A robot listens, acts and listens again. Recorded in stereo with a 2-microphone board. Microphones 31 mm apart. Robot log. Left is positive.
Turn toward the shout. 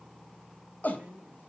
note: The shout: about 65° left or 115° left.
cmd yaw +65
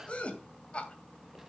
note: So it is at 40° left.
cmd yaw +40
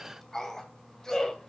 note: The shout is now 15° left.
cmd yaw +15
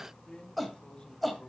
end: Found it: a shout, straight ahead.